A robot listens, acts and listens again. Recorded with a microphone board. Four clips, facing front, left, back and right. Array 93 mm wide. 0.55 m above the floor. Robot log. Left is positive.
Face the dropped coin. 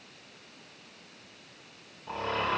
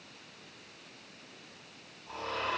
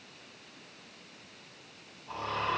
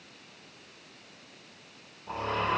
cmd idle
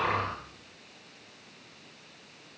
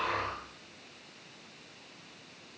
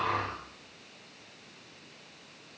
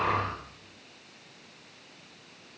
cmd idle
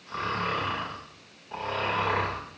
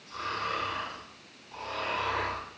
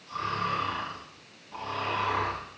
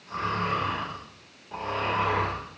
end: I can't make out a dropped coin, only snoring.